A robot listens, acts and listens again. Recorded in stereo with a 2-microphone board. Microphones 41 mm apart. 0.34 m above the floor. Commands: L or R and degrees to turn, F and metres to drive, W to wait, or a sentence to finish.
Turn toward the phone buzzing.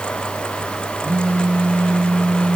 R40
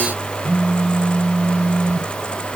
R10
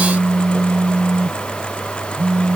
Found it: a phone buzzing, straight ahead, 2 to 4 m away.